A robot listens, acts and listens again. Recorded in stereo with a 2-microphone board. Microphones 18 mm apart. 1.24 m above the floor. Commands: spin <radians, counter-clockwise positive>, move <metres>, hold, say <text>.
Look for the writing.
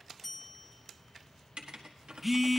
spin -1.22
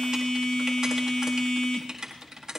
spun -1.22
spin -0.61
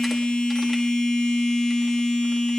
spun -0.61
hold
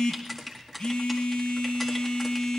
say Facing the writing.